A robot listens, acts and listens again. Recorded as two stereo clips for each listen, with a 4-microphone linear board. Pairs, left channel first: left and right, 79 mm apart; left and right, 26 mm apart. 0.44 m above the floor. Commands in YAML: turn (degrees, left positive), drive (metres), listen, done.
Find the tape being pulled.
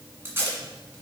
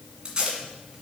turn: -30
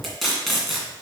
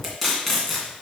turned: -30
done: "Facing the tape being pulled."